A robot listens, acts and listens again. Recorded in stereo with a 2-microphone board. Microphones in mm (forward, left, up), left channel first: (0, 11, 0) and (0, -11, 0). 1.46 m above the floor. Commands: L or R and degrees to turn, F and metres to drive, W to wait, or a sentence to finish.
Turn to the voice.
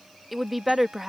R30
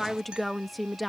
R30
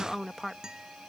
L10
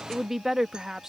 R30
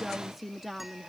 R15
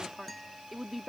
Found it: a woman speaking, straight ahead.